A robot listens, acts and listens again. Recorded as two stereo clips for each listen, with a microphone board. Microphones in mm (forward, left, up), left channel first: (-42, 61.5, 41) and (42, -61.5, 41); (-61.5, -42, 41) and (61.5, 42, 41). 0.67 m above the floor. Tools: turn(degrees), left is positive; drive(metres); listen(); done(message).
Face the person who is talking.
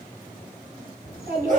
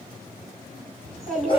turn(degrees=-55)
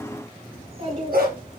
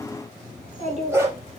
done("Facing the child speaking.")